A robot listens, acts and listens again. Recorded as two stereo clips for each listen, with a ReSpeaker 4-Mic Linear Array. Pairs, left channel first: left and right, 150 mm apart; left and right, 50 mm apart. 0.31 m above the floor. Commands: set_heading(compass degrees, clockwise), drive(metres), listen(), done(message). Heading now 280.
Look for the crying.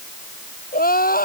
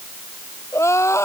set_heading(205)
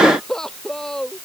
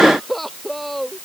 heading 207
done("Facing the crying.")